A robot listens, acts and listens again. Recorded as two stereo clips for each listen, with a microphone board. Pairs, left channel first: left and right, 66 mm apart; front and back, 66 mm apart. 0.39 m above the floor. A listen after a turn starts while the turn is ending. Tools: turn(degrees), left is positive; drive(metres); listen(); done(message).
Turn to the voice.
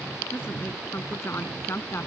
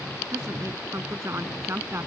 turn(degrees=135)
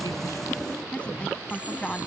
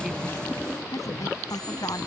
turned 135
turn(degrees=15)
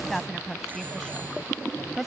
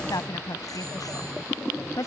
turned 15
done("Found it: a woman speaking, straight ahead.")